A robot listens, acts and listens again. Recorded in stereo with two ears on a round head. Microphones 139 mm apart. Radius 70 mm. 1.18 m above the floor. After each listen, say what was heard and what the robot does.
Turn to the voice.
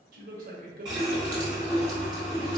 The man speaking: about 60° right or 120° right. Turn 60° right.
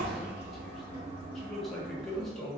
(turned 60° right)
Facing the man speaking.